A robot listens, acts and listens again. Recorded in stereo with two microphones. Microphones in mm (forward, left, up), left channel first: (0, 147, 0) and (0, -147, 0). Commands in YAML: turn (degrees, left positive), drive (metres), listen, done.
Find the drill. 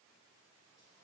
listen: true
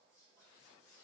listen: true
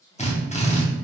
turn: 25
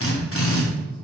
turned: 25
turn: 130
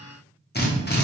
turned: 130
turn: 35
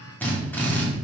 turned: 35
done: "Found it: a drill, straight ahead."